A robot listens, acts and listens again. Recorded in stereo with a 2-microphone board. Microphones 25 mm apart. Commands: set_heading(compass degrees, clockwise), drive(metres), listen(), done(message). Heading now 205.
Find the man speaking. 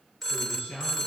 set_heading(115)
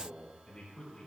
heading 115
set_heading(90)
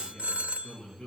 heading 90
set_heading(75)
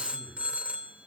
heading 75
listen()
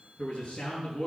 set_heading(60)
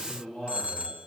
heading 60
set_heading(50)
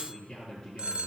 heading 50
done("Found it: a man speaking, straight ahead.")